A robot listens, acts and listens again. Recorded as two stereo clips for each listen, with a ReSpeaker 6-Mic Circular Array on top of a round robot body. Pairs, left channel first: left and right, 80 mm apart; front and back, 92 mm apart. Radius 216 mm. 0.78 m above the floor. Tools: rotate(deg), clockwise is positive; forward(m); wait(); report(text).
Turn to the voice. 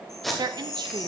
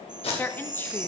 rotate(65)
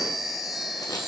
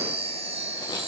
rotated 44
rotate(25)
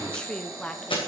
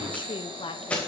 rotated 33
rotate(-10)
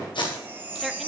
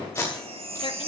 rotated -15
wait()
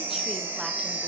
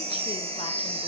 wait()
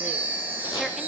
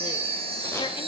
report("Facing where the woman speaking came from. I can't hear it now.")